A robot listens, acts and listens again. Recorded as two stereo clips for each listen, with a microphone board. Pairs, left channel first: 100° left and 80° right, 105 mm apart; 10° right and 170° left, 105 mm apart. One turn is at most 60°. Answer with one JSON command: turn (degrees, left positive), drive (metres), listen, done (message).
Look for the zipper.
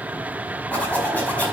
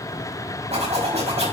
{"turn": 60}
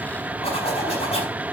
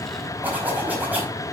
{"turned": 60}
{"turn": 60}
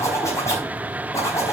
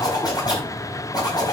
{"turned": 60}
{"turn": 40}
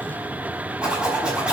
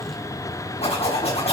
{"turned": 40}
{"done": "Facing the zipper, over 4 m away."}